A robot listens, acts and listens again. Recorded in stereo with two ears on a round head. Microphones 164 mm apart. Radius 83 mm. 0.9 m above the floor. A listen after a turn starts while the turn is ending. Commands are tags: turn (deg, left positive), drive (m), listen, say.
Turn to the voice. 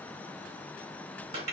<listen/>
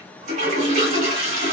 <listen/>
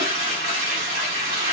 <say>I can't make out anyone speaking, only a toilet flushing.</say>